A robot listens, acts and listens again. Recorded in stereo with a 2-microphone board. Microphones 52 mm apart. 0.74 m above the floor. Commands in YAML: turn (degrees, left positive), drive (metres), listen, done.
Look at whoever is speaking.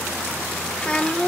turn: 20
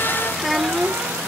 done: "Facing the child speaking."